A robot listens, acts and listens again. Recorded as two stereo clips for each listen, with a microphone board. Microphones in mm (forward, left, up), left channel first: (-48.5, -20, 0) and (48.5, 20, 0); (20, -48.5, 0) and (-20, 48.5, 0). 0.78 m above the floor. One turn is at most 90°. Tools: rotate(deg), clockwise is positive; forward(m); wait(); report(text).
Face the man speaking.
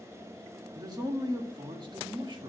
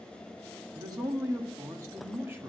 rotate(-50)
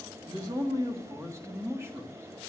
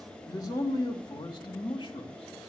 rotate(40)
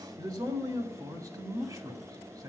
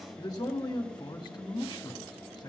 rotate(25)
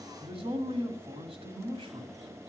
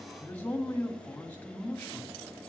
rotate(-10)
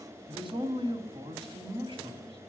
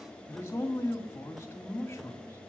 report("Found it: a man speaking, straight ahead, 2 to 4 m away.")